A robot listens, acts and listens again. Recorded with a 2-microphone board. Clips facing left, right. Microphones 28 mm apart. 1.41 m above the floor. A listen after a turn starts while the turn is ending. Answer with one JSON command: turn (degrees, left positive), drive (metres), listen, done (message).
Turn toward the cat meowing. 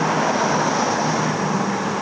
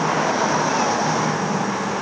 {"listen": true}
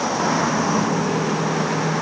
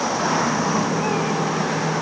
{"listen": true}
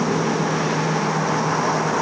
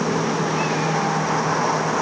{"done": "I can't make out a cat meowing."}